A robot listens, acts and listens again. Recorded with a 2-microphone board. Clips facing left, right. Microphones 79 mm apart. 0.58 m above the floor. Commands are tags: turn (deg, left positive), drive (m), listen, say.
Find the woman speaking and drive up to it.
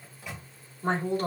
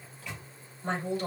<turn deg="45"/>
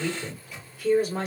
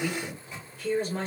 <drive m="1.0"/>
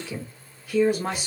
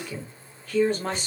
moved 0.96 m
<turn deg="10"/>
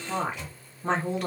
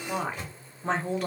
<drive m="1.0"/>
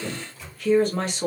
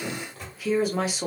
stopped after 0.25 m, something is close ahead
<turn deg="-10"/>
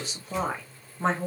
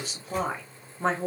<say>Arrived at the woman speaking, straight ahead.</say>